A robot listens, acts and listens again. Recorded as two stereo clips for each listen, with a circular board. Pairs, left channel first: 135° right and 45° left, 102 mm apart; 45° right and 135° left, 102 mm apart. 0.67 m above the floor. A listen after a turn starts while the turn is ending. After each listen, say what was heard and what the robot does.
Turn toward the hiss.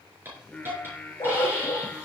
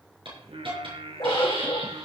The hiss: 110° left. Turn 110° left.
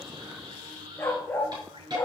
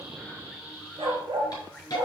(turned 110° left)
Facing the hiss, over 4 m away.